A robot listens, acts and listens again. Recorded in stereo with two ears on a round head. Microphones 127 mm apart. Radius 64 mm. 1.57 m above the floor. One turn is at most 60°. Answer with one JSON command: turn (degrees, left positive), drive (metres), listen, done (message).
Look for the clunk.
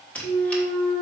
{"turn": 45}
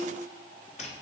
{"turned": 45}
{"listen": true}
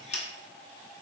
{"done": "I heard a clunk, but can't make it out now. It was about straight ahead or 90° left."}